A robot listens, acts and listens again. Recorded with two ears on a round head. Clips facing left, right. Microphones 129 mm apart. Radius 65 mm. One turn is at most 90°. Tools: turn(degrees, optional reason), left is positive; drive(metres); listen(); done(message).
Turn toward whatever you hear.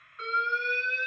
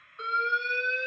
turn(degrees=-20, reason="The alarm: about 20° right or 160° right.")
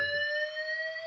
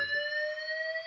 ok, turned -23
done("Facing the alarm, 2 to 4 m away.")